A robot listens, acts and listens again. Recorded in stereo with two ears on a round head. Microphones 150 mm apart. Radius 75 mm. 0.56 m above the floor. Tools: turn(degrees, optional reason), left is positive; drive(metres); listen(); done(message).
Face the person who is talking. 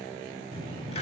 turn(degrees=30, reason="The child speaking: about 30° left or 150° left.")
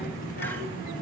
turn(degrees=125, reason="So it is at 125° left.")
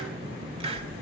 turn(degrees=-30, reason="The child speaking is now 30° right.")
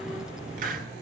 done("Found it: a child speaking, straight ahead.")